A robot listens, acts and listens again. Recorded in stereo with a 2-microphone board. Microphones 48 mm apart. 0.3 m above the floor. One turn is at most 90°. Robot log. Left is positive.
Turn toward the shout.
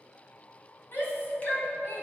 note: The shout: about 50° left or 130° left.
cmd yaw +50
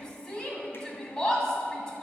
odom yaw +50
note: So it is at 15° left.
cmd yaw +15
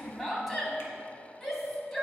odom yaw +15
end: Found it: a shout, straight ahead.